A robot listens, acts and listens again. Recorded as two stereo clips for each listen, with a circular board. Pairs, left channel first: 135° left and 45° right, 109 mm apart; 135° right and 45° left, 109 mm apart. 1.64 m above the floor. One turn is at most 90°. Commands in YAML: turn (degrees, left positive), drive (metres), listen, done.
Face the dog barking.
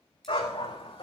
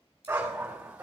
turn: 90
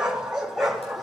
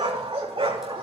turn: 45
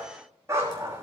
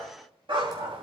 turn: 20
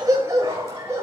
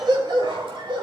turn: 15
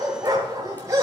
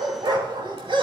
turn: 10
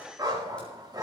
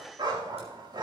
done: "Found it: a dog barking, straight ahead, 2 to 4 m away."